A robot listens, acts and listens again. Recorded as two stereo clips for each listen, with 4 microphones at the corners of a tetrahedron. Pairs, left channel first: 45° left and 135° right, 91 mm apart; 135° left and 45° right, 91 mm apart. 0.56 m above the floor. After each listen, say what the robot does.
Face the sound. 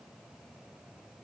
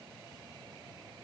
Keep listening.
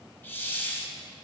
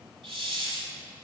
Turn 20° right.
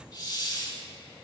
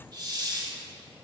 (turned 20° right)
Facing the hiss, 1 to 2 m away.